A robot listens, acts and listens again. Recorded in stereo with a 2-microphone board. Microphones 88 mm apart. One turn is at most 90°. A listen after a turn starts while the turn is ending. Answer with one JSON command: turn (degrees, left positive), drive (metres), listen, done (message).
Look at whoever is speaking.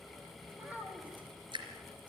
{"turn": -15}
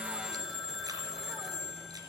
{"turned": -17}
{"listen": true}
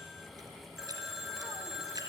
{"listen": true}
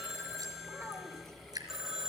{"turn": -90}
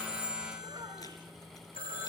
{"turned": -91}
{"turn": -55}
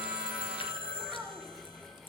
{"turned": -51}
{"done": "Found it: a child speaking, straight ahead."}